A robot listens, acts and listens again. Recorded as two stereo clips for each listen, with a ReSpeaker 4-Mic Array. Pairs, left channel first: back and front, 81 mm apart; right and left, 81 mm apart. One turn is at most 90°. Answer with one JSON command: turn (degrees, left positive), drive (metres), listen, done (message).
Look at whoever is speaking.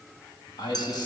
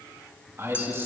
{"turn": 90}
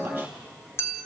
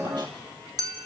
{"turn": 65}
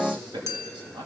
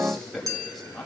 {"done": "Found it: a man speaking, straight ahead."}